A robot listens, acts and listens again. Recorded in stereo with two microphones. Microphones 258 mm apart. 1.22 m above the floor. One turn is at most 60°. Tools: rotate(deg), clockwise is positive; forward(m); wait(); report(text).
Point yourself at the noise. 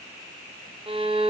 rotate(20)
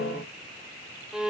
report("Facing the violin.")